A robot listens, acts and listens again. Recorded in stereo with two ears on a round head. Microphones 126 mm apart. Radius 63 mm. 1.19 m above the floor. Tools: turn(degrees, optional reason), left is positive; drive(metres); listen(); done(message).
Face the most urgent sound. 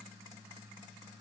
listen()
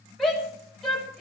turn(degrees=30)
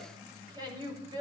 turn(degrees=-30, reason="So it is at 30° right.")
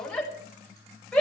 done("Found it: a shout, straight ahead, over 4 m away.")